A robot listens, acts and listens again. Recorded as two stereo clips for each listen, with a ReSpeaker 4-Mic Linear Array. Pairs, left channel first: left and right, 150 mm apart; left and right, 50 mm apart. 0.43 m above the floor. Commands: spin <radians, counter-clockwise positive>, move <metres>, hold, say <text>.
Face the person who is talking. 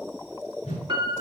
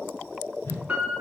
hold
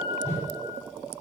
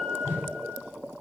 hold
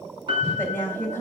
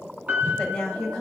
spin 0.52
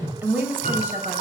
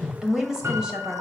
spin -0.26
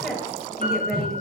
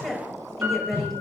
say Facing the woman speaking, 1 to 2 m away.